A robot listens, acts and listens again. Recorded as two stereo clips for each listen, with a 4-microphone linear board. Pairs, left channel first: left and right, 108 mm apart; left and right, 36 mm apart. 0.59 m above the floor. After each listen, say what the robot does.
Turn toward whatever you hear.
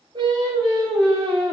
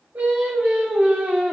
Turn 45° right.
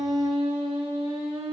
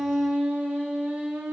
Turn 90° right.
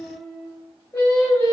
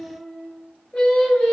Turn 20° left.
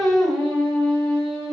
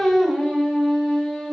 Found it: singing, straight ahead, 1 to 2 m away.